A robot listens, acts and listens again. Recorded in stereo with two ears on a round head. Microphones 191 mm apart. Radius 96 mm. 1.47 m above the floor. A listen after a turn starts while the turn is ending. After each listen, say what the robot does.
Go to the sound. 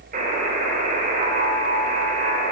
Turn 40° right.
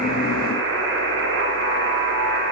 Turn 95° right.
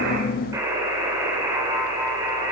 Turn 15° right.
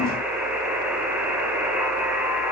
Drive 1.0 m forward.
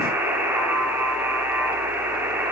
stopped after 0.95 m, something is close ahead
Turn 10° right.
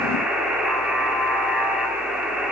I am next to the buzzer.